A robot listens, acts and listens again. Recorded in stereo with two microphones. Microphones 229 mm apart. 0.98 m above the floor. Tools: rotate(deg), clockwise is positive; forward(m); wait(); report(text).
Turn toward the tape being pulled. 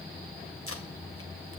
wait()
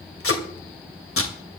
rotate(-70)
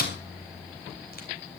rotate(-40)
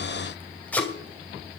report("Facing the tape being pulled.")